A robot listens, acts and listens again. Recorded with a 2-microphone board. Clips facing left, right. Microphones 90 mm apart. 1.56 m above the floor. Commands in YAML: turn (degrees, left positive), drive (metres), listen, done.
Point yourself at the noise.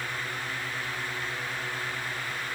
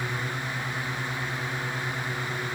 listen: true
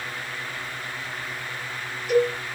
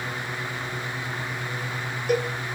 turn: -50
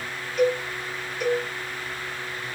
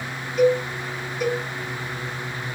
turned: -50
done: "Facing the cowbell."